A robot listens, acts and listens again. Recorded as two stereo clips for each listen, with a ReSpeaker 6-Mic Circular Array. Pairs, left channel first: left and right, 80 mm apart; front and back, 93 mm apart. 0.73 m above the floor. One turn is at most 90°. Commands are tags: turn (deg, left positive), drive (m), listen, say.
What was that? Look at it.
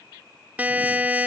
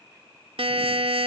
<turn deg="-90"/>
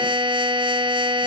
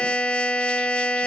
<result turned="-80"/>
<turn deg="-80"/>
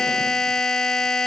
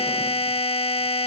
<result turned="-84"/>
<say>Facing the buzzer.</say>